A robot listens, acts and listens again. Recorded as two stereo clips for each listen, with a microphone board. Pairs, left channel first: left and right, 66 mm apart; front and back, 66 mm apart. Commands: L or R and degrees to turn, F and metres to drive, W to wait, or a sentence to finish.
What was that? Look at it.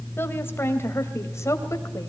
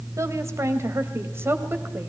L130
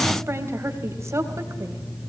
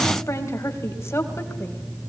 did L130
R45
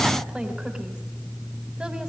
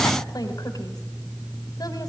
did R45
W
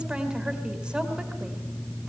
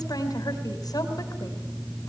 R10
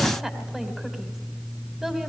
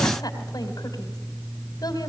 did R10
Found it: a woman speaking, straight ahead, 2 to 4 m away.